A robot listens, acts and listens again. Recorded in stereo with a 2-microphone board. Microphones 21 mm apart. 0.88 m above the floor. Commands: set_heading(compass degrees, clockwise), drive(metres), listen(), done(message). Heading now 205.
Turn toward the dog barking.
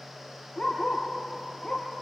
set_heading(165)
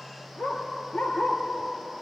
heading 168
set_heading(58)
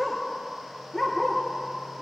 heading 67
set_heading(42)
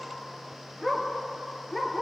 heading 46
done("Facing the dog barking.")